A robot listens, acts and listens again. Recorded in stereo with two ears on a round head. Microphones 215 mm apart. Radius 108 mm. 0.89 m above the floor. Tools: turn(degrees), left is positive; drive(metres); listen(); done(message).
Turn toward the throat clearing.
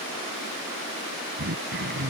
turn(degrees=-45)
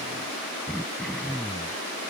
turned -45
done("Facing the throat clearing.")